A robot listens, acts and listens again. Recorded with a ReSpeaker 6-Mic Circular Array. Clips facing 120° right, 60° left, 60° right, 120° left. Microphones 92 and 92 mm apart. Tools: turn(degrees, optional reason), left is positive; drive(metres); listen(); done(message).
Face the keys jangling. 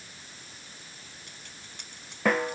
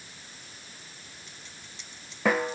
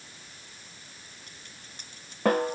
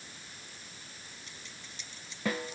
turn(degrees=-95, reason="The keys jangling: 95° right.")
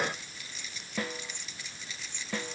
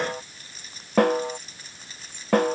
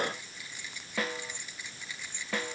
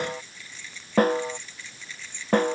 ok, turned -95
turn(degrees=15, reason="The keys jangling is now 15° left.")
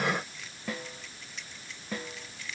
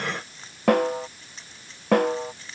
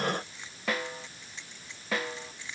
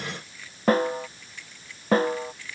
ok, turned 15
done("Facing the keys jangling.")